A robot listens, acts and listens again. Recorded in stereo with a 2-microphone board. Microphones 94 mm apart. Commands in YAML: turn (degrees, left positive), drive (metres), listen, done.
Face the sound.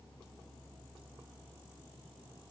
listen: true
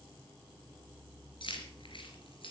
turn: 65
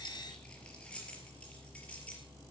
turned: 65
turn: 10
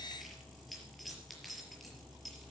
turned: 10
done: "Facing the keys jangling."